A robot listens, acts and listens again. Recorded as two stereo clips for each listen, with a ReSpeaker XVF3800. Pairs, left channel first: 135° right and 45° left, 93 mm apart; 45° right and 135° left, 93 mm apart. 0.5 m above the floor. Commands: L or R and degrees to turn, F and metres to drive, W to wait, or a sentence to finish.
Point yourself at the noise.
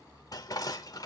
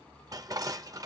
L180
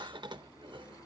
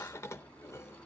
L15
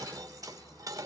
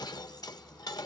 Found it: dishes clattering, straight ahead, under 1 m away.